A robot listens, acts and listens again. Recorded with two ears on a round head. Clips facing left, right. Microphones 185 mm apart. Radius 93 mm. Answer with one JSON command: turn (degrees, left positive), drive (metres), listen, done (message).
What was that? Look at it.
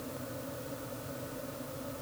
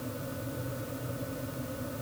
{"listen": true}
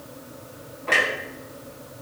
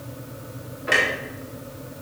{"turn": -30}
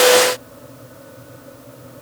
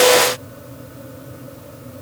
{"listen": true}
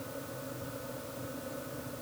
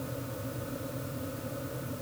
{"done": "I heard a clunk, but can't make it out now. It was about 15° left or 135° right."}